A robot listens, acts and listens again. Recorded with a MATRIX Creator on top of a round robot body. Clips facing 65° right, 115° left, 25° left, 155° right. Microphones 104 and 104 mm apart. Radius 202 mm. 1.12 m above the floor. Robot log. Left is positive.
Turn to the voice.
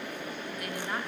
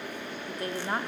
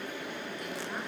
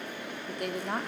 note: The woman speaking: 175° left.
cmd yaw +175
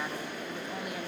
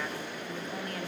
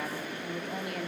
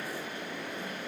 cmd idle
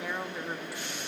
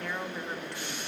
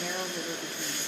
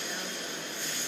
note: The woman speaking is now 15° left.
cmd yaw +15
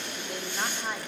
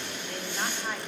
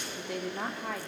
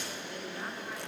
note: The woman speaking is now 15° left.
cmd yaw +15
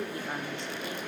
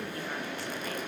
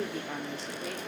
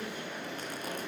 cmd idle
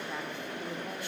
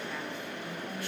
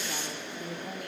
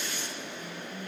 cmd idle
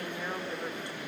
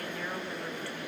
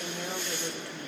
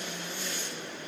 end: I heard a woman speaking from this way, but can't make it out now.